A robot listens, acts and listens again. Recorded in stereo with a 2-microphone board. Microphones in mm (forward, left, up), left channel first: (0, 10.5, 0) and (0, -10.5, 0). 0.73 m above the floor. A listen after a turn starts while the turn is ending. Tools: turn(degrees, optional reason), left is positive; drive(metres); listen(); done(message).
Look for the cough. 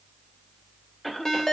turn(degrees=30)
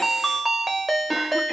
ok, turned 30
listen()
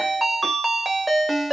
listen()
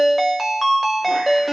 done("I heard a cough, but can't make it out now. It was about 20° right or 140° left.")